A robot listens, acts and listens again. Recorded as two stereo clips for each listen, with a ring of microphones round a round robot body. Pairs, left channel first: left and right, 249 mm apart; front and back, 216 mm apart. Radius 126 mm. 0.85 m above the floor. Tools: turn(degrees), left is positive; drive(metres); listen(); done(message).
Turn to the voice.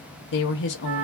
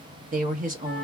turn(degrees=130)
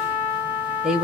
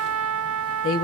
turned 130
done("Facing the woman speaking, under 1 m away.")